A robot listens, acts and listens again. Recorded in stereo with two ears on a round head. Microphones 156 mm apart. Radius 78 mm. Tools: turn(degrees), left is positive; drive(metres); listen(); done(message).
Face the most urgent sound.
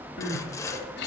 turn(degrees=65)
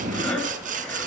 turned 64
done("Facing the crying, 2 to 4 m away.")